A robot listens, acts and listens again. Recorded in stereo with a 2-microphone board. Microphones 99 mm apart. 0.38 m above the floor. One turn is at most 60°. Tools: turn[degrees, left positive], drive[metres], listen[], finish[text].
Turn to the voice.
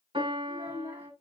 Thought: The child speaking: about 25° right or 155° right.
Action: turn[-25]
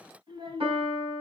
Thought: So it is at 125° right.
Action: turn[-60]
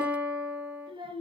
Thought: The child speaking is now 60° right.
Action: turn[-60]
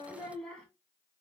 Thought: The child speaking is now 10° left.
Action: turn[10]
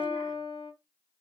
Action: listen[]
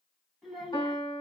Action: finish[Found it: a child speaking, straight ahead.]